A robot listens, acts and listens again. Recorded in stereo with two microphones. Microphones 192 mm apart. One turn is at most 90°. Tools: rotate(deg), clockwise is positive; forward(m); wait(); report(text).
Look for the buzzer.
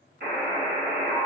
rotate(55)
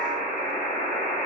report("Found it: a buzzer, straight ahead, 1 to 2 m away.")